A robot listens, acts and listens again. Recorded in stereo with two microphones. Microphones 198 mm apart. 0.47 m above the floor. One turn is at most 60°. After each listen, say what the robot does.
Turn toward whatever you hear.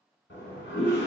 Turn 60° left.
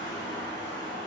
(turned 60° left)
Turn 15° left.
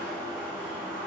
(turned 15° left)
Facing the toilet flushing, 1 to 2 m away.